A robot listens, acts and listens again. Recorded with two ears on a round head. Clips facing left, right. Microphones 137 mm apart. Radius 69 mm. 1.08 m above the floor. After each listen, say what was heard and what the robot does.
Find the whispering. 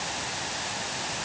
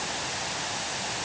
Keep listening.
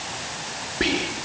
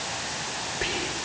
Turn 90° left.
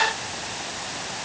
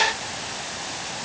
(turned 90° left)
Keep listening.
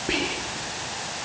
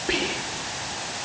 Found it: whispering, straight ahead.